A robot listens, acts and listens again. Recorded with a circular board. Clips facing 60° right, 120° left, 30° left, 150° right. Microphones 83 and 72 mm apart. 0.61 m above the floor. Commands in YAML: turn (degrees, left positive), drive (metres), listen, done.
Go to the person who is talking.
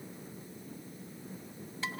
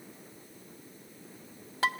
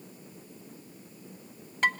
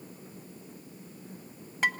listen: true
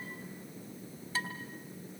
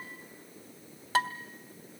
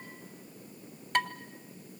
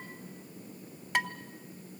listen: true
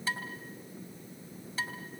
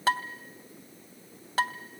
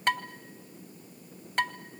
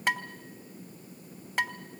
done: "I can't make out anyone speaking, only dishes clattering."